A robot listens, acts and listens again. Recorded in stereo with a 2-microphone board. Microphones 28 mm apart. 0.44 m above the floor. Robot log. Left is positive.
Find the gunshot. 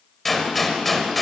cmd yaw +30
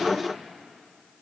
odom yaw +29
cmd idle
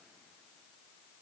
end: I heard a gunshot, but can't make it out now. It was about 25° right or 145° left.